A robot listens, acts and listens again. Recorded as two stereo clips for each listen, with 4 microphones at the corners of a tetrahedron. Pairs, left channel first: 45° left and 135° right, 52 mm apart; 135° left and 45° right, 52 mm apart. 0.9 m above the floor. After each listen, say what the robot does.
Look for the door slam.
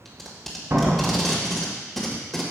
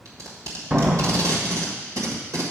Turn 105° right.
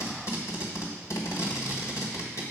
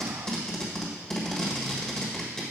Facing where the door slam came from. I can't hear it now.